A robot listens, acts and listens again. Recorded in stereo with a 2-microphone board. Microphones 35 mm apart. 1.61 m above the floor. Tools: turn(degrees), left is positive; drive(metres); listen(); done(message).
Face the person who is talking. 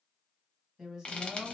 turn(degrees=-20)
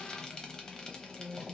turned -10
turn(degrees=-10)
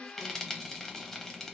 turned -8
listen()
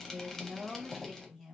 done("Found it: a woman speaking, straight ahead, 1 to 2 m away.")